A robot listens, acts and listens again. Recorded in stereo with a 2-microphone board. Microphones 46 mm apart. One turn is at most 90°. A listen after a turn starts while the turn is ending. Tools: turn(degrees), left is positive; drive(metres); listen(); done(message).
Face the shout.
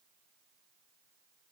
listen()
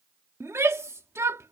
turn(degrees=-90)
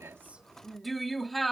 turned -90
done("Found it: a shout, straight ahead.")